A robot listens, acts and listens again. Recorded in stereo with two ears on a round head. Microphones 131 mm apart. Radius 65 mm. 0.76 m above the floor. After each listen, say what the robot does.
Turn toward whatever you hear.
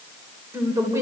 Turn 20° right.
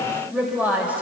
Turn 30° right.
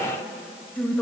Turn 10° left.
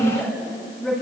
Found it: a woman speaking, straight ahead, over 4 m away.